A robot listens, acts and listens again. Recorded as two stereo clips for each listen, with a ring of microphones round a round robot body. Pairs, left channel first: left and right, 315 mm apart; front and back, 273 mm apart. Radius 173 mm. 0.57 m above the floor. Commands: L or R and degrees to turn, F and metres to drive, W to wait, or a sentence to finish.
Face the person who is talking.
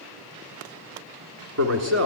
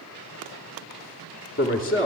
R55
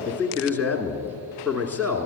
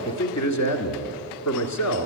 Found it: a man speaking, straight ahead, 1 to 2 m away.